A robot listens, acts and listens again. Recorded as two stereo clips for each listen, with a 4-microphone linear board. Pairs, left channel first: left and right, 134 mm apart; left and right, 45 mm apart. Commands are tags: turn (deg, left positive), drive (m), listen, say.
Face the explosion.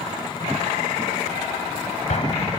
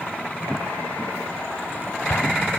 <turn deg="55"/>
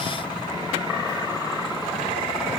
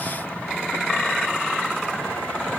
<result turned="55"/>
<listen/>
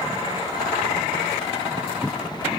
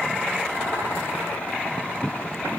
<say>I heard an explosion, but can't make it out now. It was about straight ahead or 70° left.</say>